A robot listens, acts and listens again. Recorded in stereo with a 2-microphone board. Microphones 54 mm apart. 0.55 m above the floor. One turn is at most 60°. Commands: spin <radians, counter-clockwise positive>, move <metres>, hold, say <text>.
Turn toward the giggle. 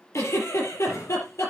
spin 1.05
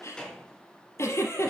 spin 0.96
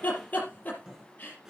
spin 0.52
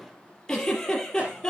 spin 0.17
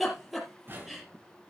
say Facing the giggle.